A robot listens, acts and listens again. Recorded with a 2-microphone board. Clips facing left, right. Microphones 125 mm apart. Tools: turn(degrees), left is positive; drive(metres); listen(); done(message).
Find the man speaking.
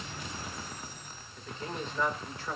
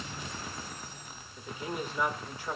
turn(degrees=-30)
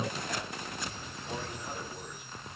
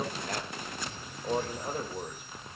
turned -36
turn(degrees=-120)
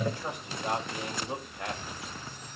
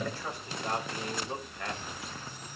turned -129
turn(degrees=20)
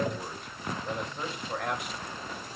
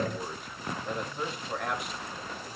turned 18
done("Found it: a man speaking, straight ahead, over 4 m away.")